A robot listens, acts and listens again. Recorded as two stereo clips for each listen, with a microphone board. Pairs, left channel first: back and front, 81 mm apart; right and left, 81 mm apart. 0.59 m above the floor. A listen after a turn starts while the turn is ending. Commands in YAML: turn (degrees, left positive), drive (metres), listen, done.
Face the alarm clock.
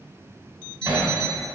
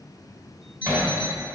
turn: -160
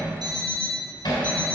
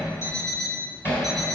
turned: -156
done: "Found it: an alarm clock, straight ahead, 2 to 4 m away."